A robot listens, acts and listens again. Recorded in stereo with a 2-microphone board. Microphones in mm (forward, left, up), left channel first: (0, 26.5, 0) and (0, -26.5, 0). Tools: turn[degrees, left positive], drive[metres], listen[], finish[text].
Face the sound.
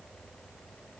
Action: listen[]
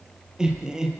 Action: turn[-30]
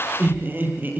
Thought: So it is at 145° right.
Action: turn[-145]
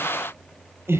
Thought: The laughter is now 50° right.
Action: turn[-50]
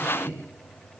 Thought: The laughter is now 25° right.
Action: turn[-25]
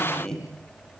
Thought: The laughter is now 10° left.
Action: turn[10]
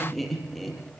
Action: finish[Found it: laughter, straight ahead, over 4 m away.]